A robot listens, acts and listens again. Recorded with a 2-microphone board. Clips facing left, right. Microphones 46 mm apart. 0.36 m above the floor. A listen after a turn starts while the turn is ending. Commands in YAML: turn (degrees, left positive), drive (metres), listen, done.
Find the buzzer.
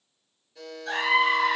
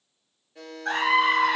turn: -30
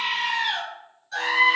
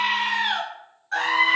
listen: true
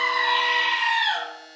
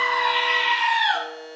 turn: -120
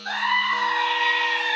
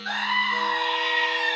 listen: true
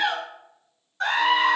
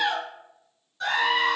listen: true
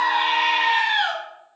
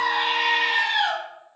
done: "Facing where the buzzer came from. I can't hear it now."